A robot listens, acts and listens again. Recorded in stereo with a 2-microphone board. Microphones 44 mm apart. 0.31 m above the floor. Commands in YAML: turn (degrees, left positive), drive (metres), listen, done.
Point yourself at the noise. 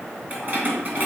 turn: -45
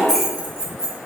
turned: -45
turn: -15
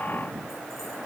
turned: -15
listen: true
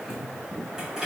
turn: -10
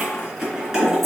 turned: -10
turn: -10
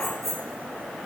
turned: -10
done: "Facing the keys jangling, 2 to 4 m away."